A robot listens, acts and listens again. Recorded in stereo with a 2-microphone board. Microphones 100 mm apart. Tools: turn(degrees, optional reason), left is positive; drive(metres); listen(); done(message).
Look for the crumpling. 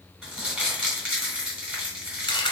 turn(degrees=-30)
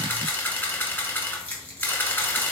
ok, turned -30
turn(degrees=25, reason="So it is at 25° left.")
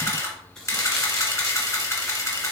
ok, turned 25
turn(degrees=15, reason="The crumpling is now 15° left.")
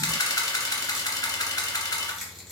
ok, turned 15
done("Found it: crumpling, straight ahead, 1 to 2 m away.")